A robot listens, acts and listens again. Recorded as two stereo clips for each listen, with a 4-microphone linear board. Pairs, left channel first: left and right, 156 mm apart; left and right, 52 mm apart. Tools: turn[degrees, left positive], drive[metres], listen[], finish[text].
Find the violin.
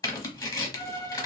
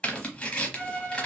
Thought: The violin: about 20° left or 160° left.
Action: turn[20]
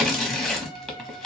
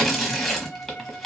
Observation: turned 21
Thought: So it is at 140° left.
Action: turn[140]
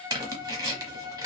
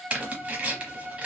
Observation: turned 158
Thought: The violin is now 20° right.
Action: turn[-20]
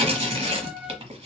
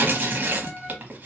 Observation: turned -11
Action: finish[Facing the violin, under 1 m away.]